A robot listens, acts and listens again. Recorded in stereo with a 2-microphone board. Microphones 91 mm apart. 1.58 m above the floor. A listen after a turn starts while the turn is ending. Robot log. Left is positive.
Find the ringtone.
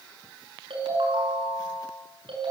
note: The ringtone: about 75° right or 105° right.
cmd yaw -75
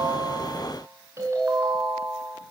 note: So it is at 35° right.
cmd yaw -35
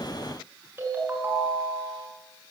note: The ringtone is now 25° right.
cmd yaw -25
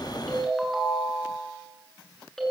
end: Found it: a ringtone, straight ahead.